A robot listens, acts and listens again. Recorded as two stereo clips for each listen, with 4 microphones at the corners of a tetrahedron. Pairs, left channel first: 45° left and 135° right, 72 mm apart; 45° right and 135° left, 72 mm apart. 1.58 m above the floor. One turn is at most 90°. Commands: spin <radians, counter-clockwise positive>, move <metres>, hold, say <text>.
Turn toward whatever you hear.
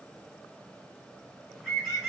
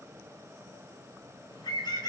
spin -0.79
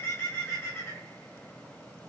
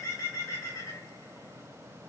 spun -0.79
spin -0.17
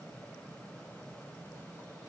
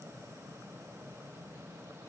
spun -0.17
hold
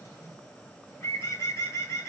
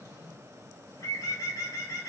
say Found it: a bird, straight ahead.